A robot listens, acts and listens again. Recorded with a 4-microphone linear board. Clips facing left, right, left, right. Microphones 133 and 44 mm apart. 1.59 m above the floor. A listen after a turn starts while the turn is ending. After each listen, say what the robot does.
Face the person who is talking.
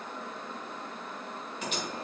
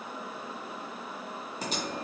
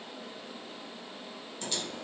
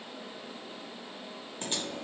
Keep listening.
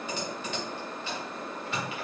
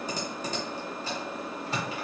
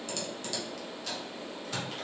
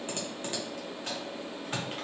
Keep listening.
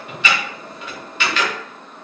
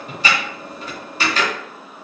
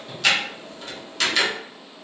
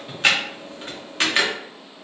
I can't make out anyone speaking to turn to.